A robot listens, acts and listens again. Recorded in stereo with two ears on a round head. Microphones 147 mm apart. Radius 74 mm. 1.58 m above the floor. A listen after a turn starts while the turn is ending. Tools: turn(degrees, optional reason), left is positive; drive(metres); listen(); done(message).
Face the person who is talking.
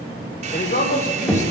turn(degrees=45, reason="The man speaking: about 45° left or 135° left.")
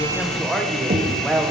done("Found it: a man speaking, straight ahead.")